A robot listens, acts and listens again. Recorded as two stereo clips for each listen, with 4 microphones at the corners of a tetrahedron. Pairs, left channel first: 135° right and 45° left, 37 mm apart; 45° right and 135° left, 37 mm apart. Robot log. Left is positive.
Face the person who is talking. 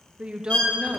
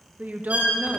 note: The woman speaking: 100° left.
cmd yaw +100
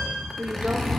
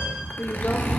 end: Found it: a woman speaking, straight ahead.